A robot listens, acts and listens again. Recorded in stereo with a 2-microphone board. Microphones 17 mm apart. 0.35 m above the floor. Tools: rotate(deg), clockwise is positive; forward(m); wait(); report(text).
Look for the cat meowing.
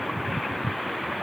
wait()
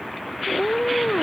rotate(-30)
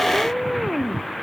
rotate(20)
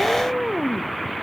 rotate(10)
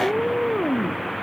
report("Facing the cat meowing.")